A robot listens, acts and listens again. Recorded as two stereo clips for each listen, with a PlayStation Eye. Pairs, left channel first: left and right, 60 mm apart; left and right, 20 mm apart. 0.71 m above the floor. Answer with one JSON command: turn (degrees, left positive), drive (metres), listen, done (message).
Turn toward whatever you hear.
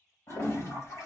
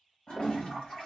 {"turn": 50}
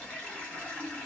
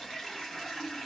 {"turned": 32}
{"turn": 25}
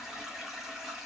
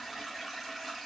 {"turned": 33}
{"done": "Facing the toilet flushing."}